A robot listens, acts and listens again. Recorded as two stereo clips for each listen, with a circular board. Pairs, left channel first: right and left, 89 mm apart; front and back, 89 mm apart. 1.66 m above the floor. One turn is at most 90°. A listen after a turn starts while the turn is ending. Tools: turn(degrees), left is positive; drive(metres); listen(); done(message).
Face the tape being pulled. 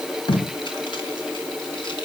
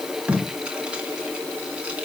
turn(degrees=-90)
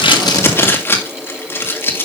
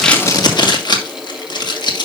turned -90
turn(degrees=-30)
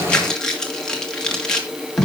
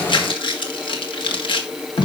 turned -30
turn(degrees=-10)
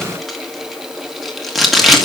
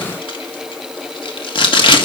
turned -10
done("Facing the tape being pulled.")